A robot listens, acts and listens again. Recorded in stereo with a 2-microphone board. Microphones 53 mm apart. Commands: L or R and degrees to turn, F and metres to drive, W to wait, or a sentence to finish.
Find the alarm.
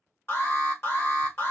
L45
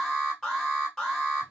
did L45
L10
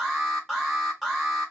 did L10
Facing the alarm.